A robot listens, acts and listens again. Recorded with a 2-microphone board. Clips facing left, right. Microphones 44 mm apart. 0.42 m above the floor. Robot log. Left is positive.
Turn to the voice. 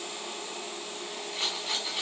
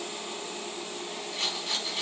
cmd idle
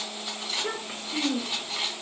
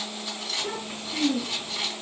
note: The child speaking: about 60° left or 120° left.
cmd yaw +60
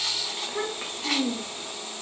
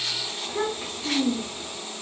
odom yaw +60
note: So it is at 45° left.
cmd yaw +45
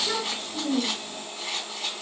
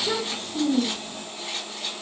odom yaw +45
note: The child speaking is now 10° left.
cmd yaw +10
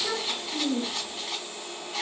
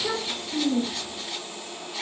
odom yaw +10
end: Found it: a child speaking, straight ahead, 1 to 2 m away.